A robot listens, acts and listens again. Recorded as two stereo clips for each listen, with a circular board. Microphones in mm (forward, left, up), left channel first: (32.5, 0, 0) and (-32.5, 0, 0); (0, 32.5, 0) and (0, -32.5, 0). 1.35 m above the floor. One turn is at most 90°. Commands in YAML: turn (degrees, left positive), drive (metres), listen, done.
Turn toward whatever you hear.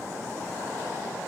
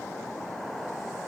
listen: true
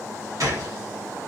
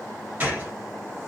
turn: -90
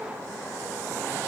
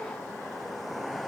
turn: -60
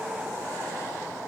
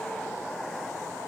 done: "I heard a gunshot from this way, but can't make it out now."